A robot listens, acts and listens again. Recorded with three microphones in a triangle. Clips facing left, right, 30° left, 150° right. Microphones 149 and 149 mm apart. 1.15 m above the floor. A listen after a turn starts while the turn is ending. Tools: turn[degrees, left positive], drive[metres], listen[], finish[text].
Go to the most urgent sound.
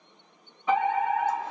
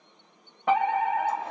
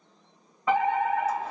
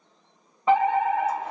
Thought: The fire alarm: 90° right.
Action: turn[-90]
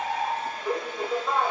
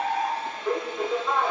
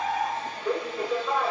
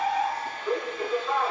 Action: drive[1.0]
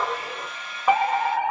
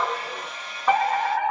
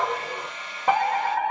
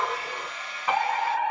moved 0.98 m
Thought: The fire alarm is now 15° left.
Action: turn[15]
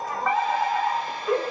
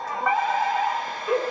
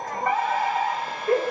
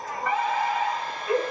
Action: drive[1.0]
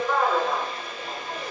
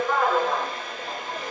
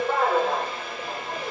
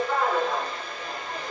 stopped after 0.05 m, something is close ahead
Action: finish[I am next to the fire alarm.]